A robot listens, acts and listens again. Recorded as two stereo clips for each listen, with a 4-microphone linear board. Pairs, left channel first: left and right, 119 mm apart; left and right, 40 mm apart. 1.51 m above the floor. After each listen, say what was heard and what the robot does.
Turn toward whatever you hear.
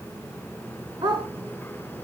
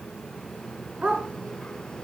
The dog barking: about 45° right or 135° right. Turn 45° right.
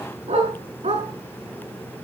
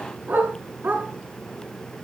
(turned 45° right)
So it is at 90° right. Turn 90° right.
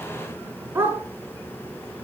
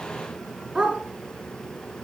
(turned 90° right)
The dog barking is now 20° right. Turn 20° right.
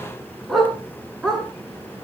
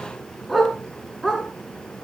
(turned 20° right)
Facing the dog barking, over 4 m away.